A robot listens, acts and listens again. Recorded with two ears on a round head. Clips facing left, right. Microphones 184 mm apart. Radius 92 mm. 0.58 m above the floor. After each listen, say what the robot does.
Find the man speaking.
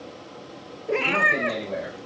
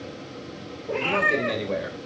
Turn 60° right.
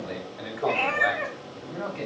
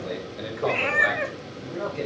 Turn 50° right.
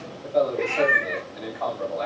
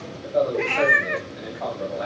Facing the man speaking.